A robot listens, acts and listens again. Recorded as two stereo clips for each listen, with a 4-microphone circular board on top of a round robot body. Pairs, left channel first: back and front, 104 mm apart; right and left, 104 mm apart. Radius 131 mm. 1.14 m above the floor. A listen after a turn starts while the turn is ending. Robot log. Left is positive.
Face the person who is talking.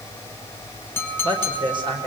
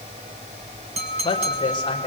note: The woman speaking: 45° right.
cmd yaw -45
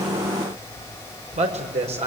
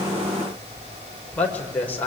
note: The woman speaking is now 15° right.
cmd yaw -15
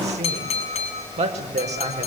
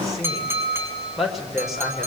end: Found it: a woman speaking, straight ahead, over 4 m away.